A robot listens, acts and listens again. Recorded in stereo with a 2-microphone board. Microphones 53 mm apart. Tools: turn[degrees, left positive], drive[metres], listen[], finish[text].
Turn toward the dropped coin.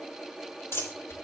Thought: The dropped coin: about 50° left or 130° left.
Action: turn[50]
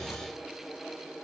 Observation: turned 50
Action: listen[]
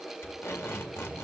Action: finish[I heard a dropped coin, but can't make it out now. It was about straight ahead or 80° left.]